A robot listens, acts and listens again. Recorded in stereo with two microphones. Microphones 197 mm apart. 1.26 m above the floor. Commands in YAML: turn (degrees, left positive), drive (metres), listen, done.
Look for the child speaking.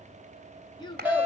turn: 20
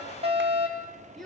done: "Found it: a child speaking, straight ahead."